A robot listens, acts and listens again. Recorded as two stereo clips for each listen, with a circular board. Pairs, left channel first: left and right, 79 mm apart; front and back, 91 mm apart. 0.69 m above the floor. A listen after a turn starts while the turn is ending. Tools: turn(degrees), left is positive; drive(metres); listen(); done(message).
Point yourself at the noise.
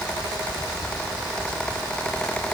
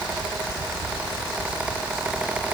listen()
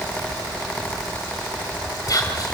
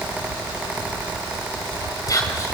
turn(degrees=50)
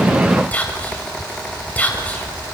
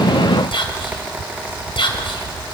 turn(degrees=20)
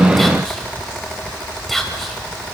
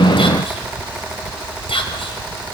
done("Facing the whispering.")